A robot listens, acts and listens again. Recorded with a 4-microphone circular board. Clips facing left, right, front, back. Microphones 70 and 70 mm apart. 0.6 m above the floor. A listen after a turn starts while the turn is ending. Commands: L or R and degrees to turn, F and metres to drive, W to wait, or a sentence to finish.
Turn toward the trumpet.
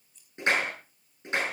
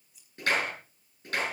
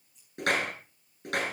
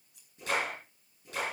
W
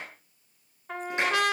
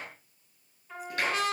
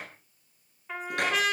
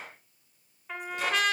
L90
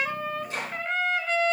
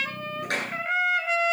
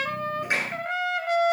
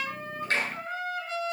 R10
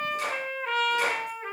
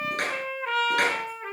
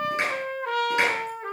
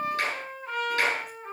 Facing the trumpet.